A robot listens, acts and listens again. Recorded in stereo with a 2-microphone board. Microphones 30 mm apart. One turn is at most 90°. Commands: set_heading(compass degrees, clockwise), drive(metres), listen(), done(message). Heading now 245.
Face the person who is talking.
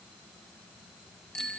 listen()
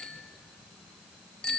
listen()
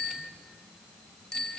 done("I can't make out anyone speaking to turn to.")